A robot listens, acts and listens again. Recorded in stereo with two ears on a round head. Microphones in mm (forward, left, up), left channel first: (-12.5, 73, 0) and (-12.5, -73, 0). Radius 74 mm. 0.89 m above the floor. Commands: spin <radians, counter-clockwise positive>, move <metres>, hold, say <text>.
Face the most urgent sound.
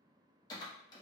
hold
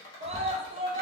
spin -0.61
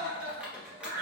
spin -1.75
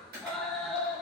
say Found it: a scream, straight ahead.